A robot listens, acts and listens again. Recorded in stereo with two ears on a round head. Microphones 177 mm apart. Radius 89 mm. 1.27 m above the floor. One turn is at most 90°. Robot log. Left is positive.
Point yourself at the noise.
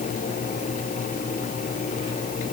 cmd idle
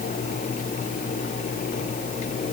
cmd idle
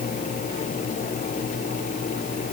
end: I can't make out anything.